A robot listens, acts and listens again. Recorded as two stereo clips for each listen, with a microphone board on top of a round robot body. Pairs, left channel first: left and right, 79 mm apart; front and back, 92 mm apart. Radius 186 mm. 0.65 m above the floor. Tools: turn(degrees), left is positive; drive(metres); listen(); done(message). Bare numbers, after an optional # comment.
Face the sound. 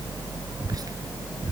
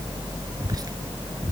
# The whispering: 130° right.
turn(-130)
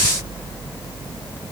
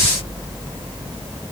listen()
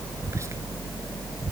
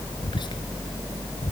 # The whispering is now 35° right.
turn(-35)
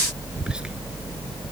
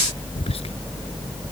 # The whispering is now 10° right.
turn(-10)
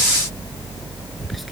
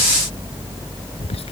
done("Found it: whispering, straight ahead.")